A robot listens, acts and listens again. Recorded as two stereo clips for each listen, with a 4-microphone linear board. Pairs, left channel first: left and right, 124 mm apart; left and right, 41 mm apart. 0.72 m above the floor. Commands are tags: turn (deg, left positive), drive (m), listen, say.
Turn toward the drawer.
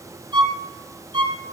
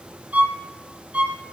<listen/>
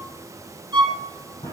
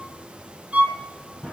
<turn deg="25"/>
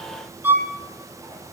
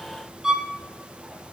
<listen/>
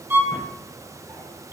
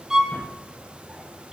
<listen/>
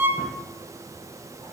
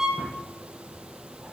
<say>I heard a drawer, but can't make it out now. It was about straight ahead or 130° left.</say>